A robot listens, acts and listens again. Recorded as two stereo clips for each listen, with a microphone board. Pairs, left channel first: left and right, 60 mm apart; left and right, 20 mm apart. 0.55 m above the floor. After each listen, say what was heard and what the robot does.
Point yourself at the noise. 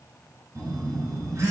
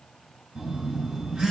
The phone buzzing: about 60° right or 120° right. Turn 60° right.
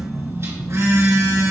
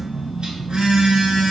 So it is at 55° right. Turn 55° right.
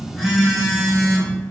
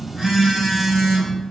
Found it: a phone buzzing, straight ahead.